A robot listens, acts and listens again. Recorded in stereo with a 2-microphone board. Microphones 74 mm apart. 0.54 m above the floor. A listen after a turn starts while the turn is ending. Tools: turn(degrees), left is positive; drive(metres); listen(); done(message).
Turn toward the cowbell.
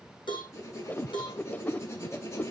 turn(degrees=90)
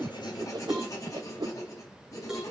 done("Found it: a cowbell, straight ahead, over 4 m away.")